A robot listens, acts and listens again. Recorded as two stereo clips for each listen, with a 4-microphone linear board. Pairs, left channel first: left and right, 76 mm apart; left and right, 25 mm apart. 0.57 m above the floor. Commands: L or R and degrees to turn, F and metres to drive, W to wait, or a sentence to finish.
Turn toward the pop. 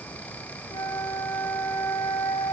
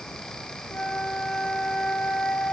W
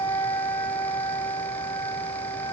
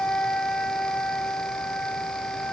W
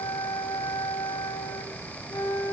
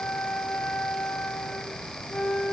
I can't make out a pop, only a flute.